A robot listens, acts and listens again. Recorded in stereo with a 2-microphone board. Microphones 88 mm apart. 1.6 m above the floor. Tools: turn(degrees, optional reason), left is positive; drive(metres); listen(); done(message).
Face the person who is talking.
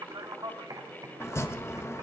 turn(degrees=-50, reason="The man speaking: about 50° right or 130° right.")
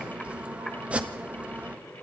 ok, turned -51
listen()
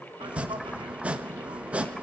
listen()
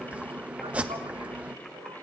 done("I heard a man speaking, but can't make it out now. It was about straight ahead or 75° right.")